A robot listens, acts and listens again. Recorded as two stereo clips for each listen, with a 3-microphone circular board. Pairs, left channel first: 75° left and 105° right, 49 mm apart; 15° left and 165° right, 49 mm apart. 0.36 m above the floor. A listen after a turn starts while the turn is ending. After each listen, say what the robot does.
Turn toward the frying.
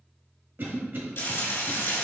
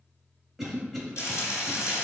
Turn 40° left.
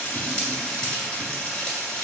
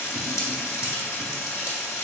Facing the frying, 1 to 2 m away.